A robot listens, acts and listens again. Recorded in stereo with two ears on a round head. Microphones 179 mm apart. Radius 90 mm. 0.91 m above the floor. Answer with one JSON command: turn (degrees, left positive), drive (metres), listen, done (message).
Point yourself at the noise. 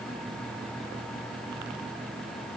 {"listen": true}
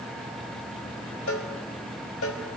{"turn": 90}
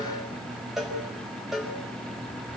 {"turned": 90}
{"done": "Found it: a cowbell, straight ahead."}